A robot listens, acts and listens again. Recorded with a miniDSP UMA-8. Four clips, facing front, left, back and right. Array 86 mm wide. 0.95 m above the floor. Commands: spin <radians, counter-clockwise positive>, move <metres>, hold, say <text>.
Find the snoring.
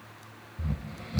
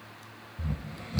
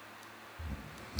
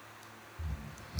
spin 0.79
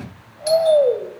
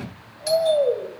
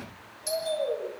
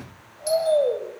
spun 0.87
say Facing the snoring, 1 to 2 m away.